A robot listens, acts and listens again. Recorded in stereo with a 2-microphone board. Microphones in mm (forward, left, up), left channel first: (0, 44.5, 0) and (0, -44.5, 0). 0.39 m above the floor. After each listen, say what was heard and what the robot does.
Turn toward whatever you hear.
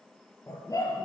The dog barking: about 40° left or 140° left. Turn 40° left.
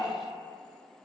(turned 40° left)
So it is at 100° left. Turn 100° left.
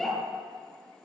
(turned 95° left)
Facing the dog barking, 2 to 4 m away.